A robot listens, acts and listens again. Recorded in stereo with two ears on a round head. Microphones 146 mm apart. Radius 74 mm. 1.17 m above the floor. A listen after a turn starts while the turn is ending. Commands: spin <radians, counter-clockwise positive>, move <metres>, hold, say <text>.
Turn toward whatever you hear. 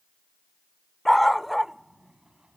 spin 0.52
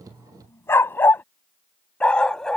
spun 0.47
spin 0.52
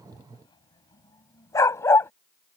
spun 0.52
spin 2.88
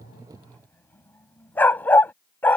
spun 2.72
spin 0.17
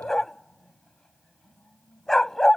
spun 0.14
say Facing the dog barking.